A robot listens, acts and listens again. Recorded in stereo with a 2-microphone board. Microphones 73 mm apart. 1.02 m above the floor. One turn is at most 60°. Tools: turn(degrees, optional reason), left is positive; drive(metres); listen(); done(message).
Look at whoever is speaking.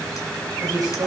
turn(degrees=-55, reason="The woman speaking: about 55° right or 125° right.")
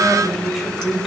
done("Found it: a woman speaking, straight ahead, over 4 m away.")